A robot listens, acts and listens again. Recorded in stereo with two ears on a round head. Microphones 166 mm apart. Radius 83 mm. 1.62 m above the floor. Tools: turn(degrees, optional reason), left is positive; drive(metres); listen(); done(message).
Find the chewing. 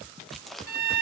turn(degrees=30)
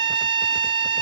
listen()
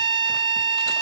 listen()
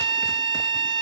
done("I heard chewing, but can't make it out now. It was about 30° right or 150° left.")